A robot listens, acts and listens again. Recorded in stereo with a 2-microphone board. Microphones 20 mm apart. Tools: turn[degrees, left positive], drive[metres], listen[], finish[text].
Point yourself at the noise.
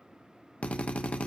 Thought: The drill: about 70° left or 110° left.
Action: turn[70]
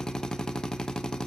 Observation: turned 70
Thought: So it is at 35° left.
Action: turn[35]
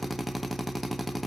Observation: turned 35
Action: finish[Found it: a drill, straight ahead, 1 to 2 m away.]